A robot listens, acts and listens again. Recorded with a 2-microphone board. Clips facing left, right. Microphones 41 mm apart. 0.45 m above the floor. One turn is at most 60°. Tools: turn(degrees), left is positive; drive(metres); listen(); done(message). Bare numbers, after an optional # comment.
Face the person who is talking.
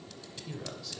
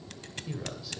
turn(-30)
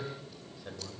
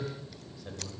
# So it is at 20° left.
turn(20)
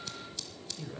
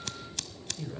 done("Facing the man speaking.")